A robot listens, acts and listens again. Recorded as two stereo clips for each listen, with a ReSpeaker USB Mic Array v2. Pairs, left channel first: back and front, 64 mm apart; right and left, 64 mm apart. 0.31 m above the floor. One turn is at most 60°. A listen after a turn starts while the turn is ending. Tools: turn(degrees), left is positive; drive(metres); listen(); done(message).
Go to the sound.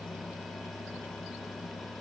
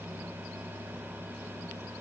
listen()
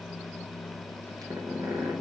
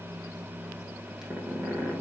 drive(metres=1.0)
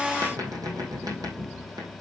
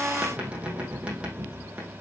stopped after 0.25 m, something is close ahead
turn(degrees=15)
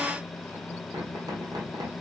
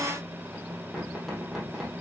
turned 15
done("Blocked. The squeak is further on, straight ahead.")